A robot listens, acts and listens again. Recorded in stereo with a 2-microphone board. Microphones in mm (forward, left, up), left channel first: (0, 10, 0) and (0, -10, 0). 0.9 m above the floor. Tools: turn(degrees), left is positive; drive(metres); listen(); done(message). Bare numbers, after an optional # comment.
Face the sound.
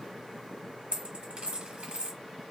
# The dropped coin: about 70° right or 110° right.
turn(-70)
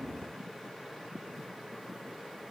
listen()
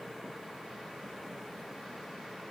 done("I heard a dropped coin, but can't make it out now. It was about straight ahead or 40° right.")